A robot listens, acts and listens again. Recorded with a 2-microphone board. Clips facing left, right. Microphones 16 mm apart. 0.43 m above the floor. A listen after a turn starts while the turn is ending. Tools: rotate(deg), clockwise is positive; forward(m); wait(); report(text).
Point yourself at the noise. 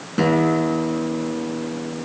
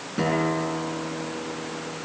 rotate(-20)
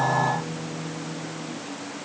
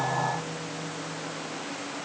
report("Found it: a guitar, straight ahead, over 4 m away.")